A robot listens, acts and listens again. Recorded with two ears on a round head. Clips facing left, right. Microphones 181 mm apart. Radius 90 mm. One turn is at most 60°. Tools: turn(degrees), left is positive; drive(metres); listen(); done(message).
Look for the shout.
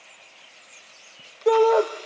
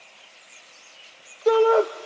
turn(degrees=30)
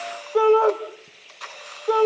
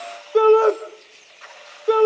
turn(degrees=-35)
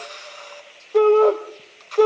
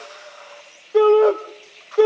turn(degrees=-10)
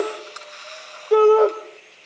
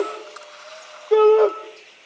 done("Found it: a shout, straight ahead, 2 to 4 m away.")